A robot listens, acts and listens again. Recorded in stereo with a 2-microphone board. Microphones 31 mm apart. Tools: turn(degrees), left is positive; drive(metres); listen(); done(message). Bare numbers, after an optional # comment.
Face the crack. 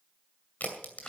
# The crack: about 55° left or 125° left.
turn(55)
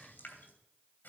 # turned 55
listen()
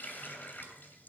done("I heard a crack, but can't make it out now. It was about straight ahead or 70° left.")